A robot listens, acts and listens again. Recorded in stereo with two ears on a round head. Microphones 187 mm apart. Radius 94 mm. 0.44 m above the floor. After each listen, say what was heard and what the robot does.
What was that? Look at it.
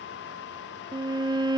The violin: about 20° right or 160° right. Turn 20° right.
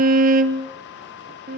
So it is at 140° right. Turn 140° right.
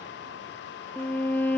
The violin is now 10° left. Turn 10° left.
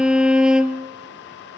Facing the violin, 1 to 2 m away.